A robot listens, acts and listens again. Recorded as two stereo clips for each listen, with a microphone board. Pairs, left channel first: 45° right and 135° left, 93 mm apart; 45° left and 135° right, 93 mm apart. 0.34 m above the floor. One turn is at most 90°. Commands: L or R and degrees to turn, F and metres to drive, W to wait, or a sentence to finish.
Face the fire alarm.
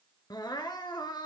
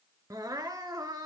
W
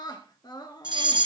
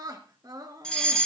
L90
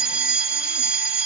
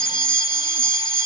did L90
L60
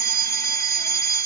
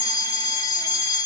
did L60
Found it: a fire alarm, straight ahead, 2 to 4 m away.